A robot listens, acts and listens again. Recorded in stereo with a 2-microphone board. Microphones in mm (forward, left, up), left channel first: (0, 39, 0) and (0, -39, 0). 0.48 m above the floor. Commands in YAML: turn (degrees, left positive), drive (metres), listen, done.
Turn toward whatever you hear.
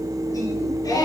turn: 55
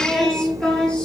turn: 10
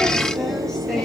turn: 10
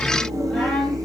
done: "Facing the singing, 2 to 4 m away."